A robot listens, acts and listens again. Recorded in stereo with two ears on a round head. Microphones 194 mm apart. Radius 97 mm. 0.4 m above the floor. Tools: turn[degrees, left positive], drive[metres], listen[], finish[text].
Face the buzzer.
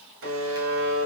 Thought: The buzzer: about 70° right or 110° right.
Action: turn[-70]
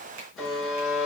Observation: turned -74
Action: finish[Facing the buzzer.]